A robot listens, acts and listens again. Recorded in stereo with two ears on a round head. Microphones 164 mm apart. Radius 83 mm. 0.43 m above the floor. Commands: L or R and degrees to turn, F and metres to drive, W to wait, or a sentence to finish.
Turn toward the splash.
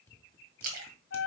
R55
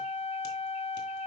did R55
W
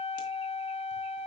I heard a splash, but can't make it out now. It was about straight ahead or 70° right.